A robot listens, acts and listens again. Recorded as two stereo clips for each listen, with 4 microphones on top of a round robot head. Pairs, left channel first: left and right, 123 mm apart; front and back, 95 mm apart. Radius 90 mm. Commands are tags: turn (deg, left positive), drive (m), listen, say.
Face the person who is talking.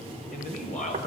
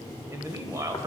<turn deg="125"/>
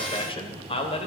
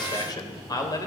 <turn deg="55"/>
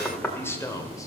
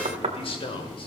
<turn deg="25"/>
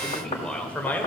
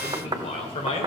<turn deg="15"/>
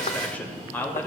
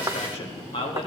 <turn deg="15"/>
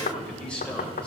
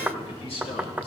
<turn deg="10"/>
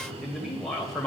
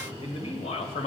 <say>Facing the man speaking, 1 to 2 m away.</say>